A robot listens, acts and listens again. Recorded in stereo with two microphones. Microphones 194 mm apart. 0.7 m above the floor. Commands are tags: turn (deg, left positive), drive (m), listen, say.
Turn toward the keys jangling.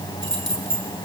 <turn deg="90"/>
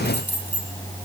<turn deg="10"/>
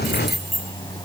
<say>Facing the keys jangling, over 4 m away.</say>